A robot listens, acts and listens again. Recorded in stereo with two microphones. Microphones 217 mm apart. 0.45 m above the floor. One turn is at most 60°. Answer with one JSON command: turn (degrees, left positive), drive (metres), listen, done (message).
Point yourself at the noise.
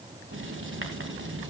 {"turn": -60}
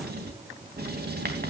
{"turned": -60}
{"turn": -50}
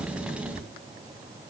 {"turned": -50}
{"done": "Found it: writing, straight ahead."}